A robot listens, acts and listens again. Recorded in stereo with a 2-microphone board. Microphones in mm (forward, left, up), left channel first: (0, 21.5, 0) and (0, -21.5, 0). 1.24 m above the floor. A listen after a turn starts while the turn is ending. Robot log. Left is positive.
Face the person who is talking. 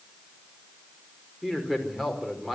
cmd yaw -30
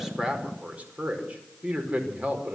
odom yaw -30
note: So it is at 145° right.
cmd yaw -145
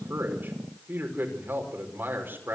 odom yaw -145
note: The man speaking is now 55° right.
cmd yaw -55
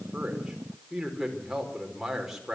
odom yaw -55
note: The man speaking is now 10° right.
cmd yaw -10
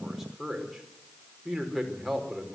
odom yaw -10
end: Found it: a man speaking, straight ahead, over 4 m away.